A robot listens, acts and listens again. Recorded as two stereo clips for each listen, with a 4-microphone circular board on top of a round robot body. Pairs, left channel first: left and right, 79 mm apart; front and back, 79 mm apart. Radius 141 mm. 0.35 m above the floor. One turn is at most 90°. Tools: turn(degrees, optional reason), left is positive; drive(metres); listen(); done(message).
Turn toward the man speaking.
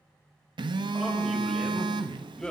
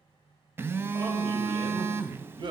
turn(degrees=90, reason="The man speaking: 170° left.")
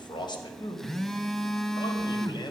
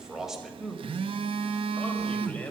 turn(degrees=70, reason="The man speaking is now 70° left.")
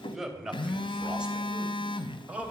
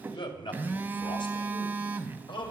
turn(degrees=-20, reason="The man speaking is now 20° right.")
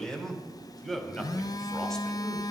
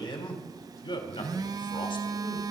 done("Facing the man speaking, 2 to 4 m away.")